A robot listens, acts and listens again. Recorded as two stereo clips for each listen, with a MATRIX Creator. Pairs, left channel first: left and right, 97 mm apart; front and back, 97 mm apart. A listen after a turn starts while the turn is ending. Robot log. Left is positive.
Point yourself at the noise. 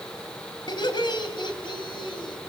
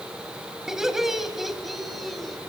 note: The laughter: 90° left.
cmd yaw +90
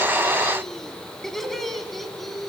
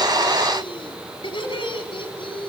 end: Facing the laughter.